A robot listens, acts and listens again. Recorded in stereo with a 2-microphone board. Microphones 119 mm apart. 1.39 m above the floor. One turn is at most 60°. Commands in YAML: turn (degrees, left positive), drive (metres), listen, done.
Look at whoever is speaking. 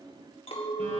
listen: true
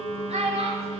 turn: -60
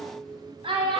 turn: -50
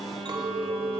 listen: true
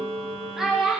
done: "Facing the child speaking."